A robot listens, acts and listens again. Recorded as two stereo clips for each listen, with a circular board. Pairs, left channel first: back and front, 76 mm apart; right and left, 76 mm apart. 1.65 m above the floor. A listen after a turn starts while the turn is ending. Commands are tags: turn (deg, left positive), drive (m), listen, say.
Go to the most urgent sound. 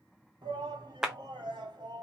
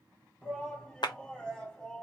<turn deg="-15"/>
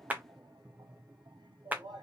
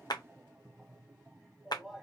<drive m="1.0"/>
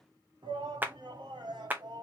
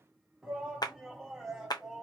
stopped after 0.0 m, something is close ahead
<say>Something is in my way. I am facing the shout but have not reached it.</say>